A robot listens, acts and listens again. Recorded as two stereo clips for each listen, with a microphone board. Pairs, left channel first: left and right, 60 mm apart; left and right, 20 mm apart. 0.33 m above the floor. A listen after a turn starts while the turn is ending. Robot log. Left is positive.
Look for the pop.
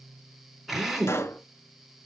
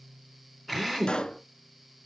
note: The pop: about 50° left or 130° left.
cmd yaw +50
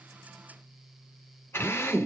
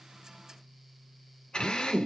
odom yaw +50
cmd idle
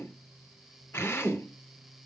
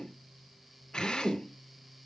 end: I heard a pop, but can't make it out now. It was about straight ahead or 80° left.